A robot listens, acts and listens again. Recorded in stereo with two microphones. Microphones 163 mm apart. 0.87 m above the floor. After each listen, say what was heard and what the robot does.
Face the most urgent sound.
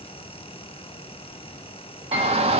The shout: about 35° right or 145° right. Turn 35° right.
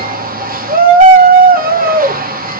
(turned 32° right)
So it is at 105° right. Turn 105° right.
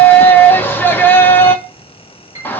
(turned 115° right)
The shout is now 15° left. Turn 15° left.
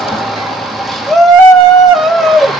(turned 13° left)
Facing the shout, 1 to 2 m away.